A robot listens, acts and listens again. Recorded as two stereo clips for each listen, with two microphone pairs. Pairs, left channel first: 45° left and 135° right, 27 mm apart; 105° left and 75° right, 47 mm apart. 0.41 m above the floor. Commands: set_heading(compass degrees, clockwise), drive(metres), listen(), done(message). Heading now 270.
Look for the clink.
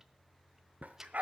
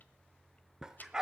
listen()
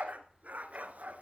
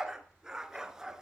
listen()
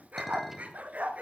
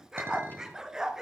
set_heading(315)
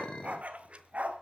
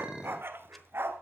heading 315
done("Facing the clink, 2 to 4 m away.")